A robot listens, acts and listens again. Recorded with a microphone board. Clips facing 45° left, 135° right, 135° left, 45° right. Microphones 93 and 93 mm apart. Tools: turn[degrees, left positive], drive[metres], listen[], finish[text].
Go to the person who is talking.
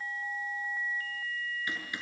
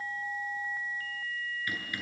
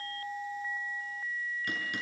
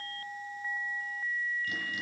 Action: listen[]
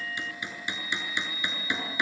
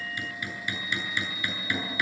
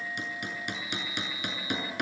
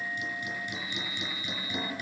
Action: listen[]
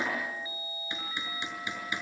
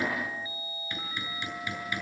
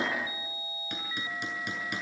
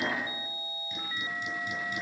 Action: finish[I can't make out anyone speaking, only hammering.]